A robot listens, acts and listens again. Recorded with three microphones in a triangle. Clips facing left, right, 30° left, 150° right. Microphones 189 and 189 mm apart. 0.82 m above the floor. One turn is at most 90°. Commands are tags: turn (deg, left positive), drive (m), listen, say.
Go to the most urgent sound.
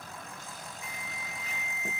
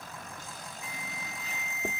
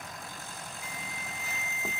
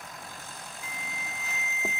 <turn deg="-45"/>
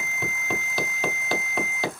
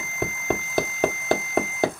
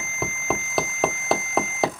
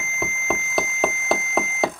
<turn deg="-15"/>
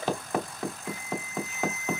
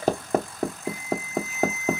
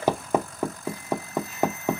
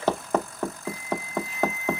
<drive m="1.0"/>
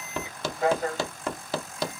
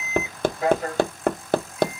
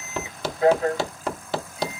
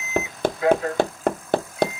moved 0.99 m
<drive m="1.0"/>
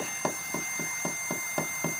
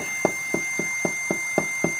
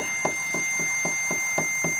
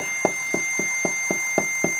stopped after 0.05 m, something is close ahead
<say>I am next to the alarm.</say>